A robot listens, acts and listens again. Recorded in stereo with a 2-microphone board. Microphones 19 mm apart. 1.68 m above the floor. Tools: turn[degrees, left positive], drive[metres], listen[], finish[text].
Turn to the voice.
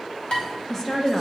Thought: The woman speaking: about 20° left or 160° left.
Action: turn[20]
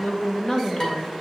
Thought: So it is at 135° left.
Action: turn[135]
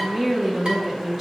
Thought: The woman speaking is now 15° right.
Action: turn[-15]
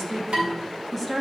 Action: finish[Facing the woman speaking.]